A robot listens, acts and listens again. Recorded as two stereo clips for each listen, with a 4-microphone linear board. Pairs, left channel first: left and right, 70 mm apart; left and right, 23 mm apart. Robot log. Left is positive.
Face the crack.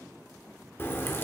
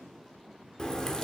note: The crack: about 35° left or 145° left.
cmd yaw +35
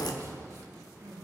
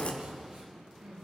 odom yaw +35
note: So it is at 115° left.
cmd yaw +115
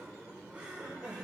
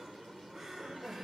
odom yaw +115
end: I heard a crack from this way, but can't make it out now.